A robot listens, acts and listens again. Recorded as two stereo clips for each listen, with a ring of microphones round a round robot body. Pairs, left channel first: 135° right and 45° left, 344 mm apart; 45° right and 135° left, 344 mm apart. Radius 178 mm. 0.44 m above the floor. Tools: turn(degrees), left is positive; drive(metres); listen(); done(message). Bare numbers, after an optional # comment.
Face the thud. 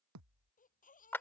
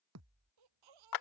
# The thud: 90° left.
turn(90)
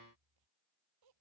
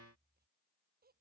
done("I heard a thud from this way, but can't make it out now.")